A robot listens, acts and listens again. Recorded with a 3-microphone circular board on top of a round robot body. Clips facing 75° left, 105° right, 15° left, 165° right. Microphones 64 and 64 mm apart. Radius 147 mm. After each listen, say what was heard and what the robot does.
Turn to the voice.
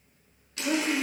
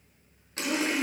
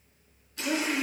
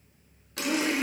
The woman speaking: 60° left. Turn 60° left.
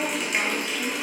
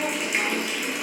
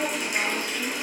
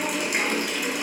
The woman speaking is now 25° left. Turn 25° left.
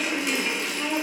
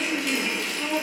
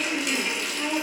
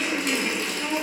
Facing the woman speaking.